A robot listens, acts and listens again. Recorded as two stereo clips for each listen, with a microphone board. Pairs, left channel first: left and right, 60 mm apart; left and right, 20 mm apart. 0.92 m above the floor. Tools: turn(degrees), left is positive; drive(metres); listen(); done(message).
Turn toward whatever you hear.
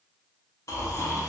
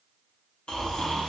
turn(degrees=60)
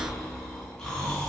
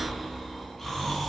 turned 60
turn(degrees=10)
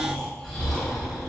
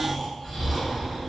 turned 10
done("Found it: snoring, straight ahead, under 1 m away.")